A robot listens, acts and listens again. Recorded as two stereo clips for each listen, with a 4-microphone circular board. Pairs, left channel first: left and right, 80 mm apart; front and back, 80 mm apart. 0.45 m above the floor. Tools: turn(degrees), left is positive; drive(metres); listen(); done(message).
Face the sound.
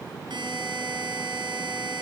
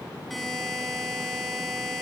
turn(degrees=-90)
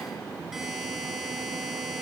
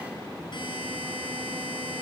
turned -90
done("Found it: a buzzer, straight ahead, over 4 m away.")